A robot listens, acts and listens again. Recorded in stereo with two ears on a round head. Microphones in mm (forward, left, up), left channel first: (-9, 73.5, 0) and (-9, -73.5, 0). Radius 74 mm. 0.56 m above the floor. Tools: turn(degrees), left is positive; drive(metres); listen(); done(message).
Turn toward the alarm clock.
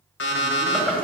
turn(degrees=90)
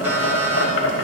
listen()
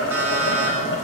turn(degrees=-15)
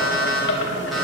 done("Facing the alarm clock.")